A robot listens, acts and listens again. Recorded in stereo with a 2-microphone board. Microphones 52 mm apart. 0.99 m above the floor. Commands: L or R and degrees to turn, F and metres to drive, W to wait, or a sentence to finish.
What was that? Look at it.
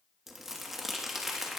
R30
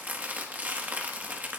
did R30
R145
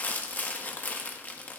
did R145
L35
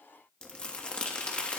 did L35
L20
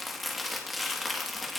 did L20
Found it: crumpling, straight ahead, 1 to 2 m away.